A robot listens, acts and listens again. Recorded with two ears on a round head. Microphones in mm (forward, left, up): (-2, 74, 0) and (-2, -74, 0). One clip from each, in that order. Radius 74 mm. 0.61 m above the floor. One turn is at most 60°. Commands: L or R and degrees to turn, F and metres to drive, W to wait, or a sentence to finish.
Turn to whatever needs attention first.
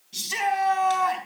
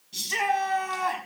R30
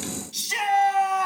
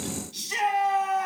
L20
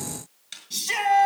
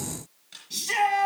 Facing the shout.